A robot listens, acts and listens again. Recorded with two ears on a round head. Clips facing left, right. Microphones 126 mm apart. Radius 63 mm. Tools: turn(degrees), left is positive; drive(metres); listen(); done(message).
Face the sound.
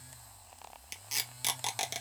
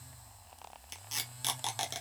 turn(degrees=30)
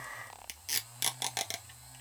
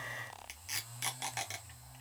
turn(degrees=140)
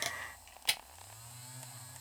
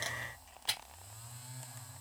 turn(degrees=20)
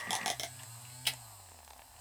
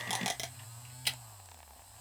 done("Facing the tape being pulled.")